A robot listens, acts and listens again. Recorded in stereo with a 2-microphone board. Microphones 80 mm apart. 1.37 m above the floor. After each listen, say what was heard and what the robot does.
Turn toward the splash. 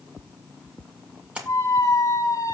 The splash: about 15° right or 165° right. Turn 15° right.
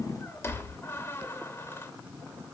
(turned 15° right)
Keep listening.
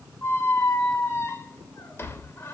I heard a splash, but can't make it out now. It was about straight ahead or 150° right.